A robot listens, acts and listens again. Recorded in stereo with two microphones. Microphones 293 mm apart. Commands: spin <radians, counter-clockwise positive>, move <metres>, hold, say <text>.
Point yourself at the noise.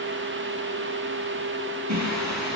spin -1.22
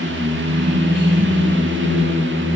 spin -0.70
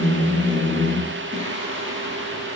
spin -0.35
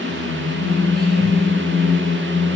say Facing the singing, over 4 m away.